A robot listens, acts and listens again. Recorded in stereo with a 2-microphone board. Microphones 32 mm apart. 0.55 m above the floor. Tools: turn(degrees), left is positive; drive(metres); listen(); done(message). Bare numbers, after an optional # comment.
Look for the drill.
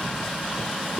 listen()
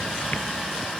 listen()
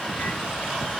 done("I can't make out a drill to turn to.")